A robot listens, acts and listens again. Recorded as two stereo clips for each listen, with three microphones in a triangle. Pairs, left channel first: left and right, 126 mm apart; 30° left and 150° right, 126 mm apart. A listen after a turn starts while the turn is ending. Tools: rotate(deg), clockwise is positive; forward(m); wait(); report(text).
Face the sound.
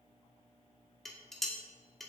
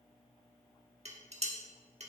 rotate(-180)
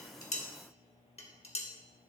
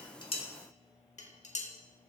rotate(-55)
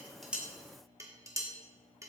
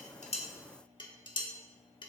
rotate(25)
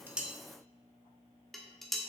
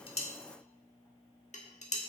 report("Found it: dishes clattering, straight ahead, 1 to 2 m away.")